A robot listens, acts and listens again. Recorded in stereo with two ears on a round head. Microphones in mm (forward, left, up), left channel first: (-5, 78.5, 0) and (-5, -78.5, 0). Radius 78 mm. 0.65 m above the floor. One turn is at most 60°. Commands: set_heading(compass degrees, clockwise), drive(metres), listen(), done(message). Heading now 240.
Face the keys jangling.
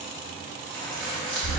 set_heading(210)
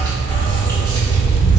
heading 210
listen()
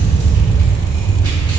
listen()
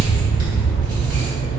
done("I heard keys jangling, but can't make it out now. It was about 25° right or 145° left.")